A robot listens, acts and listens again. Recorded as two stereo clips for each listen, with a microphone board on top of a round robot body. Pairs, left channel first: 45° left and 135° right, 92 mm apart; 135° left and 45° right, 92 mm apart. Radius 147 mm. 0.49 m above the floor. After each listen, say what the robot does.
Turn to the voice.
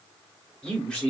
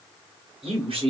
Turn 35° right.
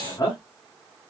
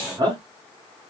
Found it: a man speaking, straight ahead, 2 to 4 m away.